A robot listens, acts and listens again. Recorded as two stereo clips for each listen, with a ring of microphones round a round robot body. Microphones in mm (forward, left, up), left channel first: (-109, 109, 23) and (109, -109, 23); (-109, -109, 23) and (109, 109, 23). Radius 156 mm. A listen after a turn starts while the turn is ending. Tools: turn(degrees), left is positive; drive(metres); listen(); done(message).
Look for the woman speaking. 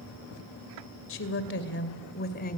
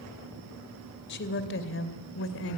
turn(degrees=-170)
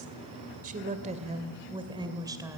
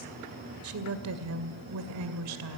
turn(degrees=35)
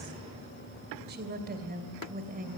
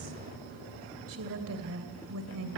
turn(degrees=15)
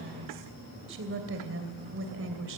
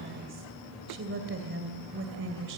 done("Found it: a woman speaking, straight ahead.")